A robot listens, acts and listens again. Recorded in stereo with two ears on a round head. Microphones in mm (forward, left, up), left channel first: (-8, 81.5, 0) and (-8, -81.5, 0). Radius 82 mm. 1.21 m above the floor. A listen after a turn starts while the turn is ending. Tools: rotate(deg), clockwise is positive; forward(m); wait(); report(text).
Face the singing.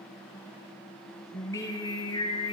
rotate(-25)
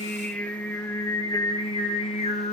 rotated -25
rotate(-35)
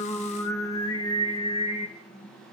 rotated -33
rotate(-35)
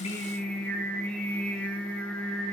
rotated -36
report("Found it: singing, straight ahead.")